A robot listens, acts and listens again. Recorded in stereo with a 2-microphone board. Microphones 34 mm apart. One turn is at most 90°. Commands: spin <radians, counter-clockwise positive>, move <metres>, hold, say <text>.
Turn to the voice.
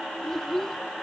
spin 0.52
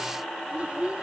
spin -0.70
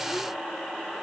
hold
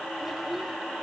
hold
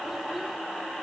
say I heard a child speaking from this way, but can't make it out now.